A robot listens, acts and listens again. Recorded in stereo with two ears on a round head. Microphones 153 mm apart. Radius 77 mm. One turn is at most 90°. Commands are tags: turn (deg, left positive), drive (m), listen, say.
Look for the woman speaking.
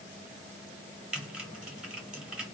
<listen/>
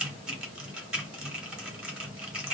<listen/>
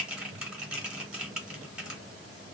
<say>I can't make out a woman speaking, only typing on a keyboard.</say>